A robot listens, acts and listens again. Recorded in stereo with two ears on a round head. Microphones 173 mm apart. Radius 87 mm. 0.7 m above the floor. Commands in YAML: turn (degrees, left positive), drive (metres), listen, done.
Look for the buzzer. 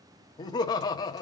listen: true
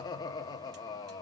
listen: true
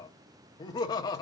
done: "I can't make out a buzzer to turn to."